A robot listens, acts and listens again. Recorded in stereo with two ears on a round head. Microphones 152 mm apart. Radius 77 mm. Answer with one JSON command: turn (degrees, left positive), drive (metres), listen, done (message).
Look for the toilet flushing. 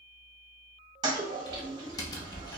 {"turn": -25}
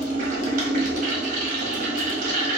{"turn": -130}
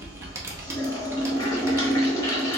{"turn": 20}
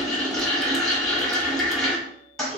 {"done": "Facing the toilet flushing."}